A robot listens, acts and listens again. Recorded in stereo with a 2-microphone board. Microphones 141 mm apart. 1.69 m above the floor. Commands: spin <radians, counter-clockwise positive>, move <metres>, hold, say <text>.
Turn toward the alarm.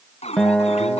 spin 0.87
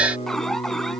say Found it: an alarm, straight ahead.